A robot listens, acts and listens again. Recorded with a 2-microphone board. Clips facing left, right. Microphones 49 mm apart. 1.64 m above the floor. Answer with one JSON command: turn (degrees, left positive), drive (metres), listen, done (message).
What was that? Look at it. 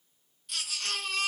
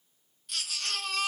{"turn": 30}
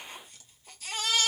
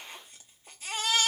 {"turn": -30}
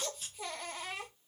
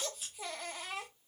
{"done": "Found it: a baby crying, straight ahead, 1 to 2 m away."}